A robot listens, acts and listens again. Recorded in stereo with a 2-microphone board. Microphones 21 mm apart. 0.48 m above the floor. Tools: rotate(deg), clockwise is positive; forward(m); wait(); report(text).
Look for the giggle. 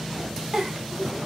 rotate(40)
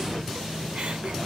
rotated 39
wait()
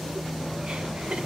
rotate(100)
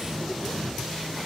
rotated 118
rotate(-15)
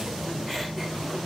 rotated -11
wait()
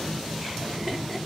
report("Facing the giggle.")